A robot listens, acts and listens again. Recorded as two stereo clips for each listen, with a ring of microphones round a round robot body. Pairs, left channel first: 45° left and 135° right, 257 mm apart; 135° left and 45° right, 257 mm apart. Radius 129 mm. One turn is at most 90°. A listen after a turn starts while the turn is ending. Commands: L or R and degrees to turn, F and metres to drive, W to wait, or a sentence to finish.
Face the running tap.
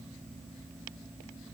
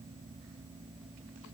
W
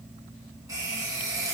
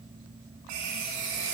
R60
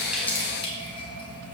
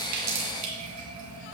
R25
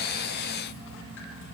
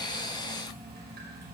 L10
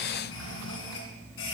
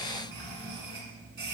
Facing the running tap.